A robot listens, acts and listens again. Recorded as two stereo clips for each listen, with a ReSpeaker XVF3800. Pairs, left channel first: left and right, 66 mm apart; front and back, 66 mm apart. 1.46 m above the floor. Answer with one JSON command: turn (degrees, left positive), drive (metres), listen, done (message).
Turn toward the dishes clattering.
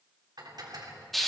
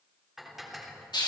{"turn": -95}
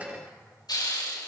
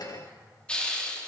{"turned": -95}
{"listen": true}
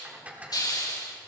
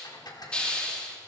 {"turn": -20}
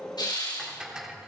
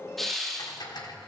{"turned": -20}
{"turn": -10}
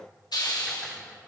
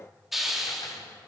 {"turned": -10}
{"listen": true}
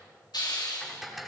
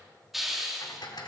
{"done": "Found it: dishes clattering, straight ahead."}